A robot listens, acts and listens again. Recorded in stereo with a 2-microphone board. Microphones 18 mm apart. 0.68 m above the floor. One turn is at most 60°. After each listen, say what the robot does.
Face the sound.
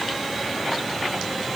Keep listening.
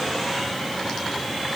Keep listening.
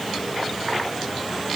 I can't make out anything to turn to.